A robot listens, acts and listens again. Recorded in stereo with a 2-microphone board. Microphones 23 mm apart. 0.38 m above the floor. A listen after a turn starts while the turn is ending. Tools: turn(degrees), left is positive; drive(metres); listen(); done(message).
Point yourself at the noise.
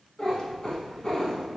turn(degrees=40)
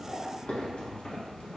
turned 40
turn(degrees=100)
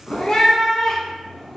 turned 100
done("Found it: a cat meowing, straight ahead.")